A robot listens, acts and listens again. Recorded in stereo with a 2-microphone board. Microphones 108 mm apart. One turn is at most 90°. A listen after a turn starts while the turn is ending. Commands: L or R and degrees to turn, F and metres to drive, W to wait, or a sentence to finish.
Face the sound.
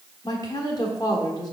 L40
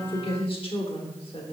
L90
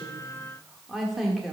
Facing the woman speaking.